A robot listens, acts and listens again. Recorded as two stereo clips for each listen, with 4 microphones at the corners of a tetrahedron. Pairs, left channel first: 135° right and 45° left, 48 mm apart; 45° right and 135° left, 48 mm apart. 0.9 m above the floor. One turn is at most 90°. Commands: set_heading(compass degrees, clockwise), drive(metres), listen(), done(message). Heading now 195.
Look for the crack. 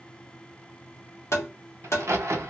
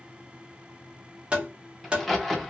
set_heading(155)
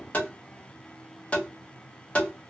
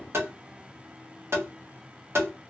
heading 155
done("Facing where the crack came from. I can't hear it now.")